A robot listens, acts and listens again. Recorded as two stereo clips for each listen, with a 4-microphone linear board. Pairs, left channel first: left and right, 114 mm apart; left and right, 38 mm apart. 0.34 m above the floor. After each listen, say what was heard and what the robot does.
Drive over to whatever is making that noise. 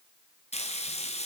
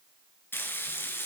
The frying: about 70° left or 110° left. Turn 70° left.
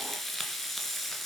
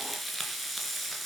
Drive 1.0 m forward.
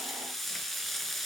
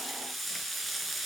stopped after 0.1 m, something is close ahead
Something is in my way. I am facing the frying but have not reached it.